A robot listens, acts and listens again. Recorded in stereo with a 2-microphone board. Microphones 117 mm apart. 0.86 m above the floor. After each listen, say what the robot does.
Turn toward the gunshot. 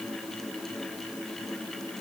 Keep listening.
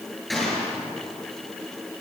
Turn 30° left.
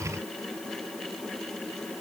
Keep listening.
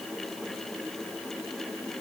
I heard a gunshot, but can't make it out now. It was about 30° right or 150° left.